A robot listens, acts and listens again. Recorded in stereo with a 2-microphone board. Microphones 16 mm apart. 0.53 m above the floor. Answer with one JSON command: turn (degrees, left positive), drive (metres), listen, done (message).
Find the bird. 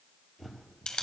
{"turn": -30}
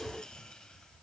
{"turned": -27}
{"listen": true}
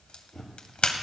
{"turn": 25}
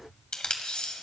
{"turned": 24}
{"done": "Facing the bird."}